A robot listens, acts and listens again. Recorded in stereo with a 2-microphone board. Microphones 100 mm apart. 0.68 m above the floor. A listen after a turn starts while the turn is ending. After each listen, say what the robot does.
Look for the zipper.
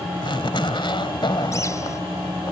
Turn 55° left.
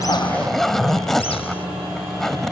Found it: a zipper, straight ahead.